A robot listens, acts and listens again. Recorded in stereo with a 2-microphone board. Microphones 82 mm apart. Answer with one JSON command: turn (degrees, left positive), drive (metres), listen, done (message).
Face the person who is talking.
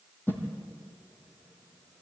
{"listen": true}
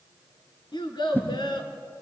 {"turn": 65}
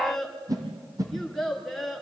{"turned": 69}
{"done": "Found it: a child speaking, straight ahead, 2 to 4 m away."}